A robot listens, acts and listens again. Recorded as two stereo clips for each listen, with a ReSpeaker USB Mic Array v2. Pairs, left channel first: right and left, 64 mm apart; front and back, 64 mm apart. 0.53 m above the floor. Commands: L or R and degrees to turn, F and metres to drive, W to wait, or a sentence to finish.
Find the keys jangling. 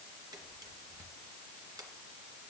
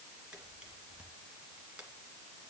W
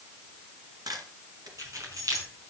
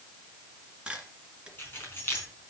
L55
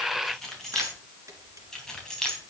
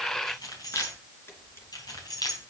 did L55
R10
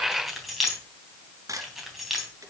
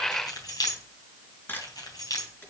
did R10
Found it: keys jangling, straight ahead, 2 to 4 m away.